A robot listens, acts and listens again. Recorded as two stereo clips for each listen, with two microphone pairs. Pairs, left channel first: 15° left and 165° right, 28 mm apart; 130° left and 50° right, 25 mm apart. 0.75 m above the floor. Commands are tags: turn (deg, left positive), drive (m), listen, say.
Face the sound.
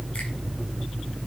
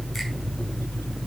<listen/>
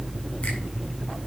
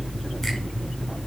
<listen/>
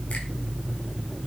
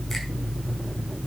<say>I can't make out anything.</say>